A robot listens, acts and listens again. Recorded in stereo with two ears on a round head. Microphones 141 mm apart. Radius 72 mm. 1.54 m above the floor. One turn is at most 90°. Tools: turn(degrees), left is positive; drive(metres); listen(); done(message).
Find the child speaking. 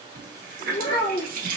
turn(degrees=35)
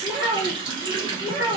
done("Facing the child speaking, 1 to 2 m away.")